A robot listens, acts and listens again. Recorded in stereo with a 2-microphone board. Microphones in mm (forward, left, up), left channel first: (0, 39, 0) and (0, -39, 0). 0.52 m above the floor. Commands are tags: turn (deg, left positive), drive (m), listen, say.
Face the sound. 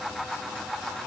<listen/>
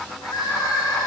<turn deg="55"/>
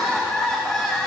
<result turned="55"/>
<say>Facing the crying, 2 to 4 m away.</say>